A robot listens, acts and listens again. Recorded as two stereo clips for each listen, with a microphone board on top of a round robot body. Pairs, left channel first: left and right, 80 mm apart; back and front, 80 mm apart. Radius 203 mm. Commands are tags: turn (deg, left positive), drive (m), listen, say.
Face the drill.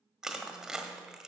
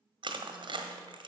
<listen/>
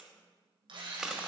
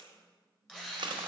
<turn deg="-95"/>
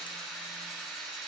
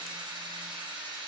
<say>Facing the drill, 2 to 4 m away.</say>